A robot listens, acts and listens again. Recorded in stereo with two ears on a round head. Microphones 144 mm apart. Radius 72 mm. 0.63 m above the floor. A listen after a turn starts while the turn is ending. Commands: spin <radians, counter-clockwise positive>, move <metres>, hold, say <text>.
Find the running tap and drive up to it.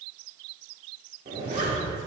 hold
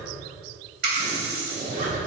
spin -1.22
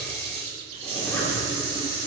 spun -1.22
spin -0.70
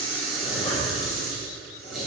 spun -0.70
move 1.0
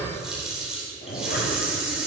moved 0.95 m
move 1.0
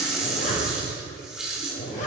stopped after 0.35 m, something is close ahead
say Arrived at the running tap, straight ahead.